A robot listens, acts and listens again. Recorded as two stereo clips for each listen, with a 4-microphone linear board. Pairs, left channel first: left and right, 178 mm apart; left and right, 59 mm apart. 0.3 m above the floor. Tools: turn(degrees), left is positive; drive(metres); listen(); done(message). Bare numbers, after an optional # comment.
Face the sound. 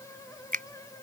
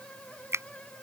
# The finger snap: about 50° right or 130° right.
turn(-50)
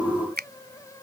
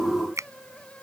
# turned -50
# So it is at 70° right.
turn(-70)
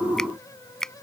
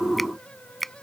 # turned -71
done("Facing the finger snap.")